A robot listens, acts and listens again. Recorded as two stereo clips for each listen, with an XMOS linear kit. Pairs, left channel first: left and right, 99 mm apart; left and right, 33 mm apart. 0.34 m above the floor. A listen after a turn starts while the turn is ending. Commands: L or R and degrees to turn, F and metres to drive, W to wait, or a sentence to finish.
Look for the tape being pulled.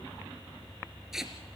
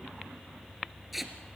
R30
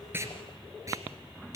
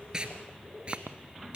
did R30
R145
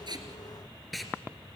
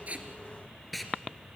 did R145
Found it: tape being pulled, straight ahead.